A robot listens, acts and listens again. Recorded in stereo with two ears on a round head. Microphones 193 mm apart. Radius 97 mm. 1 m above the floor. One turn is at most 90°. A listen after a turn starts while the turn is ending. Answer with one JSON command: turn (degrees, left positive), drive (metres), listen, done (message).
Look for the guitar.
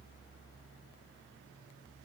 {"listen": true}
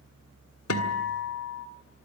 {"turn": 90}
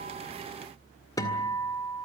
{"turn": 15}
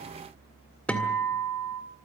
{"done": "Found it: a guitar, straight ahead."}